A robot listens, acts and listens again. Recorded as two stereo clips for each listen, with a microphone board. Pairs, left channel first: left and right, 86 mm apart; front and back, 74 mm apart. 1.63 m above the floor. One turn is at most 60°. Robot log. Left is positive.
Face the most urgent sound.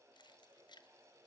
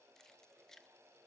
cmd idle
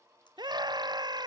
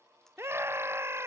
note: The scream: 125° right.
cmd yaw -60
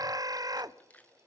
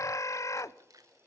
note: The scream is now 45° right.
cmd yaw -45
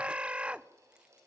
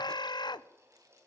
note: The scream is now 15° right.
cmd yaw -15
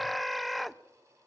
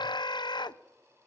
end: Found it: a scream, straight ahead, 1 to 2 m away.